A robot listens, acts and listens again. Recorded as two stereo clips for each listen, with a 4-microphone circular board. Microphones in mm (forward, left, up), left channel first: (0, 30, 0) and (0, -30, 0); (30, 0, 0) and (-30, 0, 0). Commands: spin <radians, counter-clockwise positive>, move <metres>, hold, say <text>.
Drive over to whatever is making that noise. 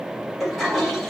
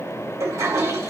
spin 3.14
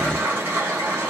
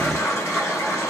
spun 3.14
spin -0.61
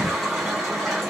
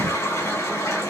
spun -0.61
move 1.0
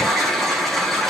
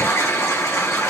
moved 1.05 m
move 1.0
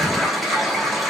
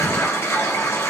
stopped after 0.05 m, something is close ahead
say I am next to the toilet flushing.